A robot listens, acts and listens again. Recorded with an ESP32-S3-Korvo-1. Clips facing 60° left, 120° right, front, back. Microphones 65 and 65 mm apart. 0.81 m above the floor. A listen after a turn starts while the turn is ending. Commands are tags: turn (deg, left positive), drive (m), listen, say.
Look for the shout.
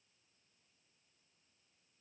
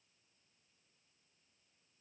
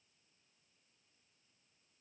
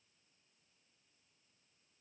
<listen/>
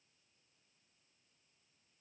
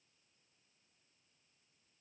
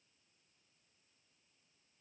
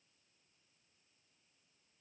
<listen/>
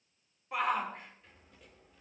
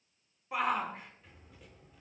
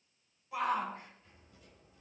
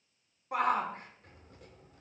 <turn deg="150"/>
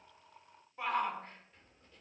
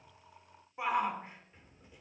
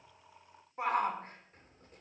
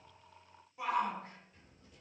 <turn deg="-45"/>
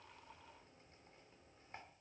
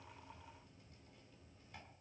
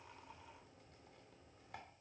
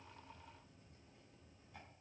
<listen/>
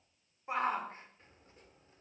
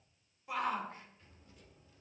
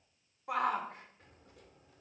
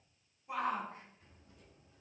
<say>Found it: a shout, straight ahead.</say>